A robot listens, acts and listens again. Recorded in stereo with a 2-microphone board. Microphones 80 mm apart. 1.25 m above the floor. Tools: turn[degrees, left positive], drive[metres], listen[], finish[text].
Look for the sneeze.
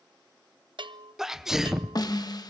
Action: turn[-30]
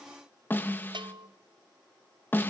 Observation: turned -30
Action: listen[]
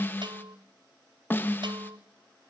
Action: finish[I heard a sneeze, but can't make it out now. It was about 25° left or 145° right.]